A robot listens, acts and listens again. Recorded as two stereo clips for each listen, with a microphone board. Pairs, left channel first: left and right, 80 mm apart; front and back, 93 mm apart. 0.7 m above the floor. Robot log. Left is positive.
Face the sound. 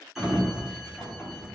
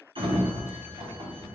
note: The sliding door: straight behind.
cmd yaw +180
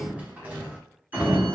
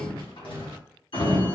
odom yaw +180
note: The sliding door is now 20° right.
cmd yaw -20
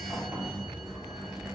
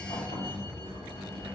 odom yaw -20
note: The sliding door is now 10° right.
cmd yaw -10
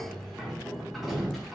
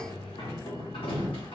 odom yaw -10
end: Facing the sliding door.